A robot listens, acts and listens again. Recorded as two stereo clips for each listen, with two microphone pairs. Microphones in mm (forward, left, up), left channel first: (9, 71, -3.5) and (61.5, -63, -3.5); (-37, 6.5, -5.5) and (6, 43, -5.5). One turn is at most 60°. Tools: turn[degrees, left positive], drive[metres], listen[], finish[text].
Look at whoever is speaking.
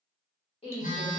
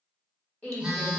Thought: The woman speaking: 160° left.
Action: turn[60]
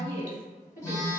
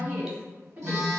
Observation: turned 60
Thought: The woman speaking is now 105° left.
Action: turn[60]
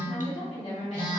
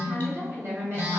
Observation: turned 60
Thought: The woman speaking is now 75° left.
Action: turn[60]
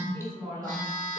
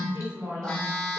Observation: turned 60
Thought: The woman speaking is now 35° left.
Action: turn[35]
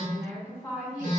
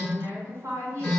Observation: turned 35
Thought: The woman speaking is now 10° left.
Action: turn[10]
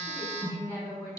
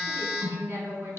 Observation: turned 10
Action: finish[Found it: a woman speaking, straight ahead.]